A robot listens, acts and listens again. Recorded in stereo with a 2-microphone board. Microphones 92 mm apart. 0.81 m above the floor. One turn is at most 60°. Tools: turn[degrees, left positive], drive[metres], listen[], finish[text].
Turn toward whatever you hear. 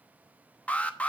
Action: turn[30]
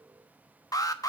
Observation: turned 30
Thought: So it is at 135° left.
Action: turn[60]
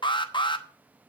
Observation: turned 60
Thought: The alarm is now 75° left.
Action: turn[60]
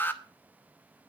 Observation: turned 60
Thought: The alarm is now 25° left.
Action: turn[25]
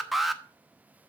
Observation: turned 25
Action: finish[Facing the alarm, under 1 m away.]